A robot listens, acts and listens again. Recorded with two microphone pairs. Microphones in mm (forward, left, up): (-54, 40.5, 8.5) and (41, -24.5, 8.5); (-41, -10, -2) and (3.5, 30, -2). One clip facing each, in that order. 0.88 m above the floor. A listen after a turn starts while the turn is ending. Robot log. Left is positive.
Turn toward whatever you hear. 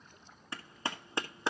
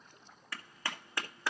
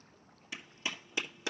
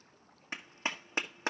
note: The clap: 80° left.
cmd yaw +80
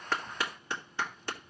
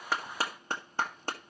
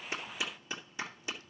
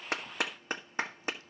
note: The clap is now 10° left.
cmd yaw +10
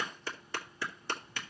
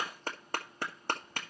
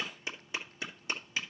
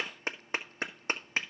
end: Found it: a clap, straight ahead, 1 to 2 m away.